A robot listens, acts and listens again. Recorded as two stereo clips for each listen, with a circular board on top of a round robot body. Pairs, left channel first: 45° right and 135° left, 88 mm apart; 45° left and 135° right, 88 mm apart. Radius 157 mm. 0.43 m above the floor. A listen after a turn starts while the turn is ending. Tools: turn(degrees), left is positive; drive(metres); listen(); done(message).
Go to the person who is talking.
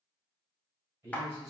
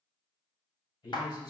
turn(degrees=85)
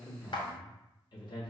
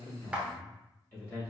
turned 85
turn(degrees=-20)
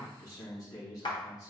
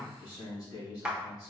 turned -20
drive(metres=1.0)
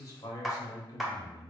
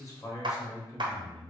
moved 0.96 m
drive(metres=1.0)
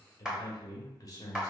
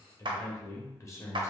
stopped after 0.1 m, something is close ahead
done("I am next to the man speaking.")